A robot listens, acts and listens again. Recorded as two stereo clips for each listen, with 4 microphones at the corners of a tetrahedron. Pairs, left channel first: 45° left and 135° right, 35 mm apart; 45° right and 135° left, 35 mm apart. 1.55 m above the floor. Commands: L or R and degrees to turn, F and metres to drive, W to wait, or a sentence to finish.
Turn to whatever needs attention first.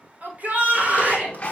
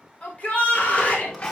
R90
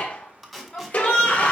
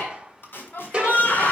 R10
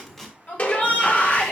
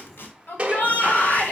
Facing the shout.